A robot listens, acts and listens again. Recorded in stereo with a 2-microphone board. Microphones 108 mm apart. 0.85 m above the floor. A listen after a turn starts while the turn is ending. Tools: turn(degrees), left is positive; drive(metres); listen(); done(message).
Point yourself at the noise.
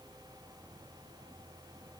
listen()
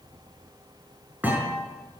turn(degrees=-30)
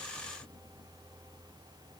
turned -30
listen()
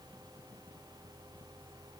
done("I heard a thud, but can't make it out now. It was about 15° left or 135° right.")